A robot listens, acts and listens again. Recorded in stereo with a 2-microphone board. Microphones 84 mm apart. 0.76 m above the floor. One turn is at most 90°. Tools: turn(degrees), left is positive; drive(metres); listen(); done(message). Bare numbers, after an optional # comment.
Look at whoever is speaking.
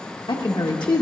# The woman speaking: about 70° left or 110° left.
turn(70)
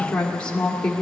# So it is at 10° left.
turn(10)
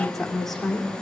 done("Found it: a woman speaking, straight ahead.")